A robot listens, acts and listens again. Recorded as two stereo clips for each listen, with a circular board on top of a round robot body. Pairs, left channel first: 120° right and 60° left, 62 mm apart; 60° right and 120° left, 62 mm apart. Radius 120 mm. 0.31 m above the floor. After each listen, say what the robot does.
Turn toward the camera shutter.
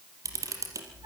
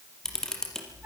Turn 25° left.
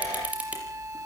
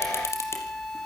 Turn 10° right.
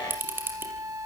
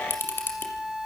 Facing the camera shutter.